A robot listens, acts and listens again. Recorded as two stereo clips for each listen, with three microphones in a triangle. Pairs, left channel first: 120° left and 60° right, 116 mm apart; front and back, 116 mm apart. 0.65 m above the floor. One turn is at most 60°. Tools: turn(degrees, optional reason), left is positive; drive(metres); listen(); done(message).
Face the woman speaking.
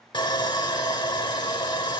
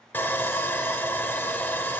listen()
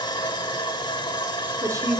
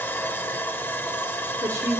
turn(degrees=-60, reason="The woman speaking: 115° right.")
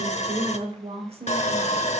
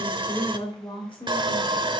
turn(degrees=-40, reason="The woman speaking is now 40° right.")
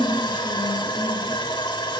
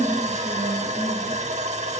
done("Found it: a woman speaking, straight ahead.")